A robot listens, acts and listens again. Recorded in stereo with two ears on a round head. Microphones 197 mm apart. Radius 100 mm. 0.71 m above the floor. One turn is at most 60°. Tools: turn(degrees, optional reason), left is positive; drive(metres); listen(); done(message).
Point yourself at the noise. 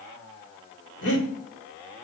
turn(degrees=60, reason="The breathing: about 60° left or 120° left.")
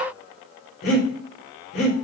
turn(degrees=50, reason="So it is at 50° left.")
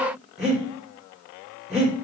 done("Facing the breathing.")